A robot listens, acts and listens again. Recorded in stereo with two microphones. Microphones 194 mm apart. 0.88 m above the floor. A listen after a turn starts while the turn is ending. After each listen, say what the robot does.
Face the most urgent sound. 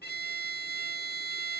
Keep listening.
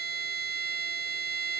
Keep listening.
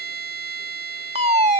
Turn 35° right.
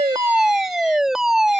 Facing the fire alarm.